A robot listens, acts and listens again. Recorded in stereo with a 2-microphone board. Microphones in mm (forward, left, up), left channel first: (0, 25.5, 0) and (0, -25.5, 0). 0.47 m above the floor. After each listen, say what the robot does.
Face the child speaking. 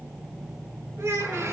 Turn 70° right.
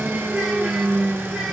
Keep listening.
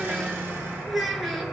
Facing the child speaking, over 4 m away.